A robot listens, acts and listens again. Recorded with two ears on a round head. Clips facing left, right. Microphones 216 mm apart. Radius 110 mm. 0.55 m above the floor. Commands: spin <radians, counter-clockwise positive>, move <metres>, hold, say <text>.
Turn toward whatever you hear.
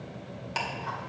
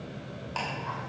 spin 0.44
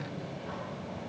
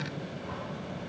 hold
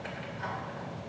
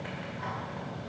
hold
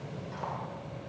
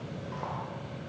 say I heard ticking, but can't make it out now. It was about straight ahead or 130° left.